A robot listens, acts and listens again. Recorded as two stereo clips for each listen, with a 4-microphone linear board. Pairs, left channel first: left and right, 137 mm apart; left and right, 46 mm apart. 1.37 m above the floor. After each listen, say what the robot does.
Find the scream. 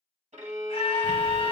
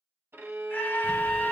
Turn 45° left.
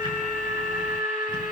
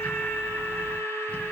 Turn 90° left.
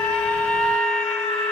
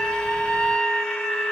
Facing the scream, 1 to 2 m away.